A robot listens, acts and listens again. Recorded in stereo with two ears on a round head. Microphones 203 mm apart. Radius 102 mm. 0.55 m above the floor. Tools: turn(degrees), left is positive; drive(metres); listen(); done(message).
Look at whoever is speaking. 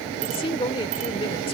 turn(degrees=25)
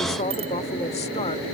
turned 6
turn(degrees=30)
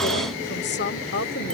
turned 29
turn(degrees=115)
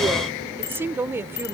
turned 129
turn(degrees=-15)
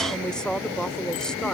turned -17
done("Found it: a woman speaking, straight ahead.")